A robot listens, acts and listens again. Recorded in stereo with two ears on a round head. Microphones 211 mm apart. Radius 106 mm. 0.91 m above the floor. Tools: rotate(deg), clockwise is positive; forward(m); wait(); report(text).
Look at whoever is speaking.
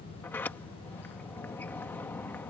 wait()
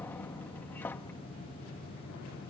wait()
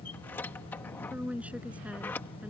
rotate(30)
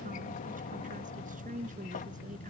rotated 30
rotate(145)
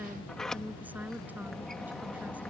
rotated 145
wait()
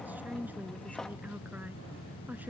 report("Found it: a woman speaking, straight ahead.")